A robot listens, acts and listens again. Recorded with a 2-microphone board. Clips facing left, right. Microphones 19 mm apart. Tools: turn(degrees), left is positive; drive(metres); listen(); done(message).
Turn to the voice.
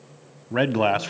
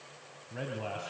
turn(degrees=60)
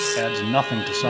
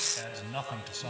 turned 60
turn(degrees=45)
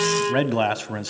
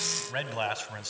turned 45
turn(degrees=10)
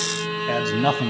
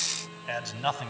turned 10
done("Facing the man speaking.")